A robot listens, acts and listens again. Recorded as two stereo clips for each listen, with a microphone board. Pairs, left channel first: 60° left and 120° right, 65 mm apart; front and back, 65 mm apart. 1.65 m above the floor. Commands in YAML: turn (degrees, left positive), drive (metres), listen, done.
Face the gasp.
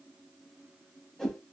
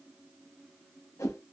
listen: true
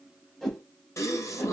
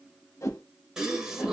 turn: 100
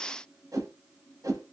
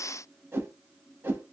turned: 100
done: "Facing where the gasp came from. I can't hear it now."